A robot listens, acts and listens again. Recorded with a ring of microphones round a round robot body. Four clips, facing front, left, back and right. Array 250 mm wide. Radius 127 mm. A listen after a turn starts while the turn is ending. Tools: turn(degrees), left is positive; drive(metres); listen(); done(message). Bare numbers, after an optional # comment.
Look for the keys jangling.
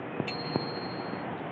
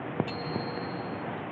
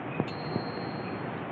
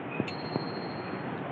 listen()
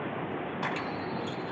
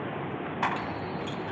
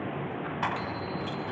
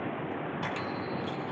# The keys jangling: 115° left.
turn(115)
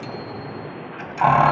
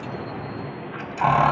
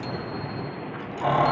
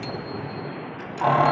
# The keys jangling is now 15° left.
turn(15)
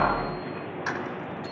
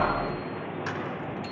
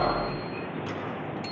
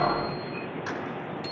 done("Facing the keys jangling.")